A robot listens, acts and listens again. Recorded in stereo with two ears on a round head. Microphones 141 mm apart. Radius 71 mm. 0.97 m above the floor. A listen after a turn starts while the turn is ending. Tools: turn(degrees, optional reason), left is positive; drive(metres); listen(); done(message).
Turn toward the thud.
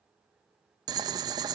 listen()
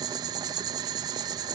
listen()
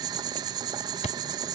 turn(degrees=45, reason="The thud: about 45° left or 135° left.")
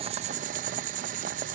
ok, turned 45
listen()
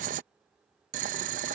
done("I heard a thud, but can't make it out now. It was about straight ahead or 90° left.")